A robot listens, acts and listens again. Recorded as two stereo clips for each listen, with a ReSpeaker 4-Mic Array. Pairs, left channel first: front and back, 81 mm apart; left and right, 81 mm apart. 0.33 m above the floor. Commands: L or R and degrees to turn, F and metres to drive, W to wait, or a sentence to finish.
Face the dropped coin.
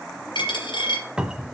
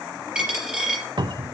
R10
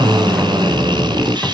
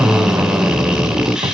Facing where the dropped coin came from. I can't hear it now.